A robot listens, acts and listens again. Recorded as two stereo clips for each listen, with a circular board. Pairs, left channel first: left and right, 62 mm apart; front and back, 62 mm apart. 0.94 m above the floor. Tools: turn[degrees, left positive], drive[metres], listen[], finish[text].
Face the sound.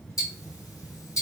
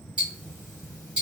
Thought: The ticking: 110° left.
Action: turn[110]
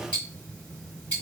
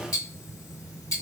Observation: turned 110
Thought: The ticking is now 25° left.
Action: turn[25]
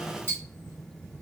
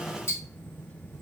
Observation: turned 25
Thought: The ticking is now 35° left.
Action: turn[35]
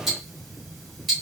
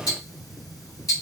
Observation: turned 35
Action: finish[Facing the ticking.]